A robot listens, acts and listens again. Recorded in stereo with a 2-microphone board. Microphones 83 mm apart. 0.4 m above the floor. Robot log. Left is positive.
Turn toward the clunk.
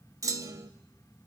note: The clunk: about 40° right or 140° right.
cmd yaw -40
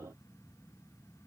cmd idle
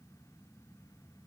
end: I heard a clunk, but can't make it out now. It was about straight ahead or 100° right.